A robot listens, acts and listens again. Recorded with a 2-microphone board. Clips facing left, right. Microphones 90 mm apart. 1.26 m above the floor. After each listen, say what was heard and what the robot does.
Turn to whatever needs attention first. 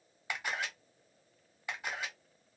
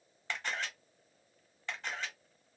Keep listening.
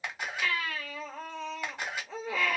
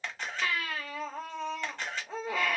The baby crying: about 60° right or 120° right. Turn 60° right.
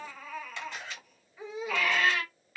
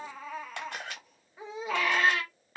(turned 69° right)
So it is at 40° right. Turn 40° right.
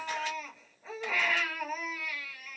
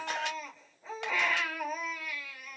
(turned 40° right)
Facing the baby crying, 1 to 2 m away.